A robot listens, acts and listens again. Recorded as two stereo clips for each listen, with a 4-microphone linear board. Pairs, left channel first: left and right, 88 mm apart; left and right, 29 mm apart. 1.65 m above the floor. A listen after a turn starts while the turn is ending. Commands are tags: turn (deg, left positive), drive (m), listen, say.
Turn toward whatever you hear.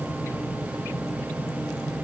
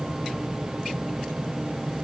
<listen/>
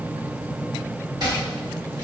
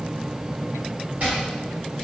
<turn deg="-50"/>
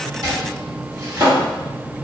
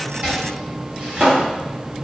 <turn deg="-60"/>
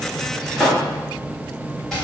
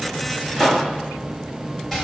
<say>Facing the chopping.</say>